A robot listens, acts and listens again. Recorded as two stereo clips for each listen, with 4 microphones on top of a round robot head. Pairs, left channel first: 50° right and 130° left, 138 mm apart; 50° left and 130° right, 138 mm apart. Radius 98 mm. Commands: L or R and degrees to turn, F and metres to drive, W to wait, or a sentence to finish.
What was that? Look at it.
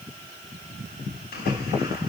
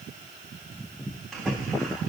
R40
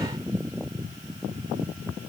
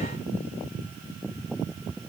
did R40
Facing where the splash came from. I can't hear it now.